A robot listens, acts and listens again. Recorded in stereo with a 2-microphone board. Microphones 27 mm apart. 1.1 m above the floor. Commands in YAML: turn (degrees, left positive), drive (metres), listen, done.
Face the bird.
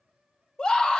listen: true
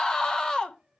listen: true
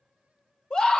done: "I can't make out a bird, only a scream."